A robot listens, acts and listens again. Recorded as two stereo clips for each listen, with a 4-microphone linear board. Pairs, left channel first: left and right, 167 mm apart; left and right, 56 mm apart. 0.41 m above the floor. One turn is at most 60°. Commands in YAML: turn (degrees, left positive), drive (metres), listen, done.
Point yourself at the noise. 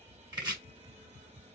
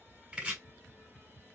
turn: -25
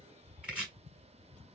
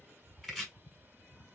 done: "Facing the chopping."